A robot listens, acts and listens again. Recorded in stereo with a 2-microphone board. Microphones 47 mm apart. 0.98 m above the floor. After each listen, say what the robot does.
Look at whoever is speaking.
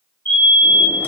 Keep listening.
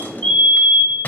Keep listening.
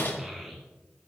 Turn 30° right.
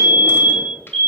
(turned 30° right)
Keep listening.
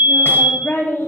Turn 55° left.
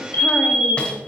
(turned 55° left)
Keep listening.
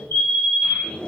Keep listening.
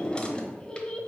Turn 20° left.
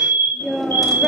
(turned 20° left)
Facing the child speaking, 1 to 2 m away.